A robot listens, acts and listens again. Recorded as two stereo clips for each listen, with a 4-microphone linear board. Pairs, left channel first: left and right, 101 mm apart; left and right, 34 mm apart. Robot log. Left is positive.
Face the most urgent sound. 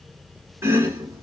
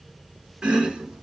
cmd idle
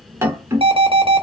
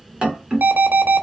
note: The alarm: about 70° right or 110° right.
cmd yaw -70
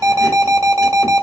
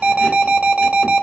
note: So it is at 35° right.
cmd yaw -35
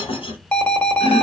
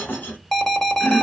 note: The alarm is now 10° left.
cmd yaw +10
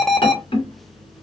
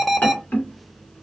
end: Facing the alarm, under 1 m away.